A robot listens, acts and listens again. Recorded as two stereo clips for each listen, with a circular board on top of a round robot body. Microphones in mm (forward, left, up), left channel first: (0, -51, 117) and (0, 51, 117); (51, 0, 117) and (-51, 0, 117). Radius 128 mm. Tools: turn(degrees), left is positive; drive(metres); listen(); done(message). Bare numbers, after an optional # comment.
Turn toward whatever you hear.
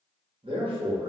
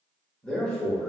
# The man speaking: 80° left.
turn(80)
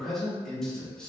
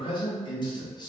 # The man speaking is now 10° right.
turn(-10)
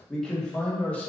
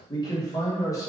# The man speaking is now 25° right.
turn(-25)
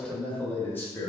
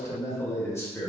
# The man speaking is now 45° right.
turn(-45)
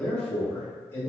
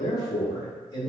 # The man speaking is now 30° right.
turn(-30)
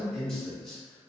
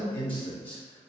done("Facing the man speaking.")